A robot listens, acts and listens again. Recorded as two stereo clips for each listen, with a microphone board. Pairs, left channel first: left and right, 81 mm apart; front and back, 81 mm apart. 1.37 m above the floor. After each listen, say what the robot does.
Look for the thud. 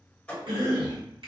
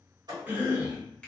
Turn 165° left.
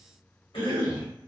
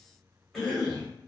Facing where the thud came from. I can't hear it now.